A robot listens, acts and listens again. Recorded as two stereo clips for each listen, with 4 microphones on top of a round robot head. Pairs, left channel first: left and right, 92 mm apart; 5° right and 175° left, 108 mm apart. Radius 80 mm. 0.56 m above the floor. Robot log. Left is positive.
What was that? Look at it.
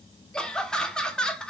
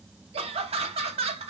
note: The laughter: 170° left.
cmd yaw +170
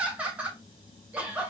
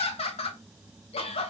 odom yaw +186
note: The laughter is now 15° right.
cmd yaw -15
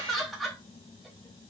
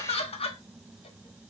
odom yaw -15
end: Facing the laughter.